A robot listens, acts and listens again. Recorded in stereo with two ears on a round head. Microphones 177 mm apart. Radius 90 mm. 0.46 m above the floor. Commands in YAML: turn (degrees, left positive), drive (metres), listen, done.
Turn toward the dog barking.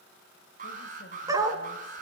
turn: -20
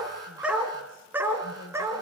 turn: -30
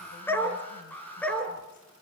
done: "Found it: a dog barking, straight ahead, 2 to 4 m away."